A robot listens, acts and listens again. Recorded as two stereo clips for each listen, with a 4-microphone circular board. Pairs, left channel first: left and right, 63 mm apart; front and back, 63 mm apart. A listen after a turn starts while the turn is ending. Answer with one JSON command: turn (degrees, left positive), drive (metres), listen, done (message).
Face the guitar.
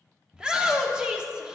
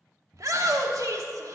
{"listen": true}
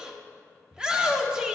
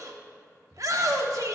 {"listen": true}
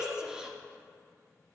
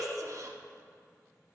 {"done": "I can't make out a guitar to turn to."}